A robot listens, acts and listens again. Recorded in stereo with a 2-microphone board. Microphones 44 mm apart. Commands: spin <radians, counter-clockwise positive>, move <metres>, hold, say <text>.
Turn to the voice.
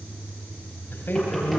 spin 0.96
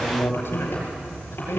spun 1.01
spin 1.13
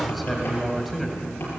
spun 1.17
say Facing the man speaking.